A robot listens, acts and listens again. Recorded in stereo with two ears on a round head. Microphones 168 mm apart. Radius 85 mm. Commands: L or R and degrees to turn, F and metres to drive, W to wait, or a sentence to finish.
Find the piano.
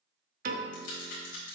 R45
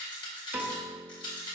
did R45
R10
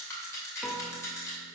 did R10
Facing the piano.